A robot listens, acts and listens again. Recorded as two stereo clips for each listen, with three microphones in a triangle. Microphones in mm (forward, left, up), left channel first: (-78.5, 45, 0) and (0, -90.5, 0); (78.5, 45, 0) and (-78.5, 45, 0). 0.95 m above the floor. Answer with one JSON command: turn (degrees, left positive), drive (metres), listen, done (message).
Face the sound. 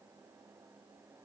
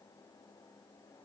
{"listen": true}
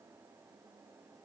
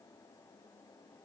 {"listen": true}
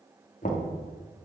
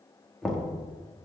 {"turn": 90}
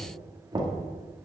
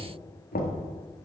{"done": "Found it: knocking, straight ahead, 1 to 2 m away."}